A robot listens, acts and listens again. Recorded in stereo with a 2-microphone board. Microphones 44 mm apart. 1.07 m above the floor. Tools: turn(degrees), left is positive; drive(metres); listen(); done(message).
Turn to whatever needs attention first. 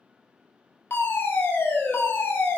turn(degrees=55)
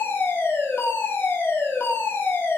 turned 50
turn(degrees=70)
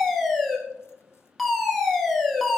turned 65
done("Facing the fire alarm.")